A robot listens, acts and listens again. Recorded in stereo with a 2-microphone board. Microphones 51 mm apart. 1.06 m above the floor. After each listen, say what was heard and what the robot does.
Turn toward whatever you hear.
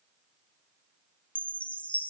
The chime: about 25° left or 155° left. Turn 25° left.
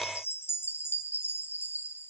So it is at 125° left. Turn 125° left.
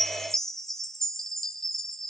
The chime is now 10° left. Turn 10° left.
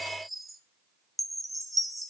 Found it: a chime, straight ahead, 1 to 2 m away.